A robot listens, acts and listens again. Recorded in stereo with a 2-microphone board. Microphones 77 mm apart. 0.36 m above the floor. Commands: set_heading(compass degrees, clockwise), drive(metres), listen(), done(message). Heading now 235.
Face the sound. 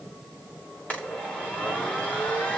set_heading(215)
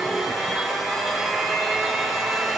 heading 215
done("Facing the blender, over 4 m away.")